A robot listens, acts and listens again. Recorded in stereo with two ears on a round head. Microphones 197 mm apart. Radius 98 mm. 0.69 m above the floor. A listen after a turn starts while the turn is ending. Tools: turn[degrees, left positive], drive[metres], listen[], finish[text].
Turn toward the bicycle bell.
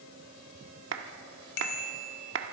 Thought: The bicycle bell: about 70° left or 110° left.
Action: turn[70]
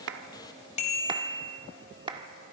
Thought: So it is at 35° left.
Action: turn[35]
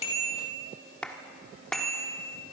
Action: finish[Facing the bicycle bell, 2 to 4 m away.]